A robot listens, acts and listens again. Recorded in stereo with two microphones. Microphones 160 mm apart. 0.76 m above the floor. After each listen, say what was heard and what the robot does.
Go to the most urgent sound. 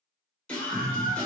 Turn 30° left.
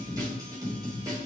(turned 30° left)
So it is at 25° right. Turn 25° right.
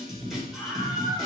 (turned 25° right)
Drive 1.0 m forward.
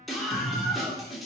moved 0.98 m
Drive 1.0 m forward.
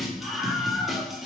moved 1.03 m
Drive 1.0 m forward.
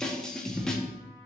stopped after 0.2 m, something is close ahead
I am next to the scream.